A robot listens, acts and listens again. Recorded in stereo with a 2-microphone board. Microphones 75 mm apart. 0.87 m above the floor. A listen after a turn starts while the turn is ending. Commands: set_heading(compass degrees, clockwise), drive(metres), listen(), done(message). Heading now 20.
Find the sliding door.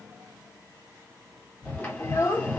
set_heading(5)
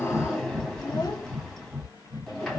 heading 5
done("Found it: a sliding door, straight ahead, 1 to 2 m away.")